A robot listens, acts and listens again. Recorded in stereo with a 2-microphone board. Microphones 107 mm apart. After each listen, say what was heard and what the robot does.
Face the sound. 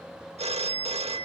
Turn 90° right.
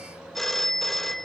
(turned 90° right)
Found it: a phone ringing, straight ahead.